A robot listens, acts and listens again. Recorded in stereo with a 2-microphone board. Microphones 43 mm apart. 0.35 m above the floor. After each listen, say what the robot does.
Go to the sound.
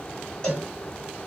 Turn 20° left.
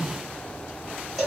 Drive 1.0 m forward.
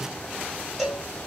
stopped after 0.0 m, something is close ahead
Blocked. The cowbell is further on, straight ahead.